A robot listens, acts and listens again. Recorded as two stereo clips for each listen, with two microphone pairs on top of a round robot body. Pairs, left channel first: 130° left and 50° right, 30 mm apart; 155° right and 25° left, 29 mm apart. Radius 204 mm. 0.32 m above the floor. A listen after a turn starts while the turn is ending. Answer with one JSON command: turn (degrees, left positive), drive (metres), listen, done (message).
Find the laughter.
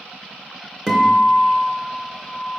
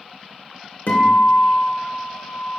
{"listen": true}
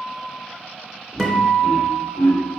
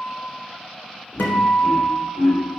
{"turn": 130}
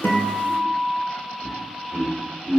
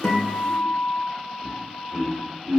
{"turn": 35}
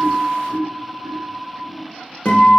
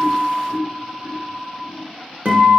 {"turn": -10}
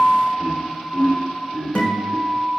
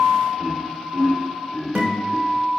{"done": "Facing the laughter."}